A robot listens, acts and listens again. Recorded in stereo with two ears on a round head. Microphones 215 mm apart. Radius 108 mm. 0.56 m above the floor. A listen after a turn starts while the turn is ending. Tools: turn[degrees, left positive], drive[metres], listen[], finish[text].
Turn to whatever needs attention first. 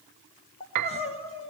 Thought: The crying: about 25° left or 155° left.
Action: turn[25]
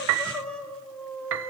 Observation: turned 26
Action: finish[Facing the crying.]